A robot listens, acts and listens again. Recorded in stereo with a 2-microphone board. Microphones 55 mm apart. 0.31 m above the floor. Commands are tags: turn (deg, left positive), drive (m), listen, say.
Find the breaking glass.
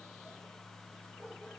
<listen/>
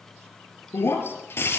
<turn deg="50"/>
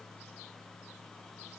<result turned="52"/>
<listen/>
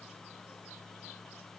<say>I heard breaking glass, but can't make it out now. It was about 5° right or 80° left.</say>